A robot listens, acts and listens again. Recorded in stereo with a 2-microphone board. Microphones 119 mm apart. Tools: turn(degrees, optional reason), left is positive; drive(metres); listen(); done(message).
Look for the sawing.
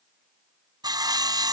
turn(degrees=-35, reason="The sawing: about 35° right or 145° right.")
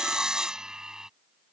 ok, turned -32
done("Found it: sawing, straight ahead.")